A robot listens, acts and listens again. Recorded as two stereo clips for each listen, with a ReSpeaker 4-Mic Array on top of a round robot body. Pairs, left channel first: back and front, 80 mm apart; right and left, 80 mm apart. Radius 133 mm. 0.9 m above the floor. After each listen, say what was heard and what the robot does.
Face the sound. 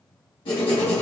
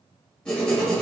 The writing: 170° right. Turn 170° right.
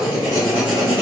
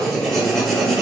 The writing is now 10° right. Turn 10° right.
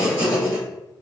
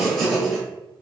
Facing the writing.